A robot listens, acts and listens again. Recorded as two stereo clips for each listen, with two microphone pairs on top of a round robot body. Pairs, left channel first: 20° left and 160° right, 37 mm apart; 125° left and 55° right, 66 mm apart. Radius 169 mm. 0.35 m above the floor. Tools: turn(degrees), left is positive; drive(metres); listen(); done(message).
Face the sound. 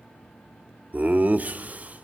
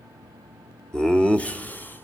turn(degrees=180)
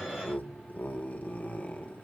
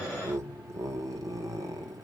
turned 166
turn(degrees=-30)
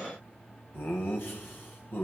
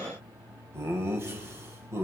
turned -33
turn(degrees=-10)
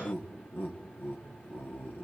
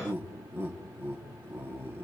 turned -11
done("Found it: laughter, straight ahead, 2 to 4 m away.")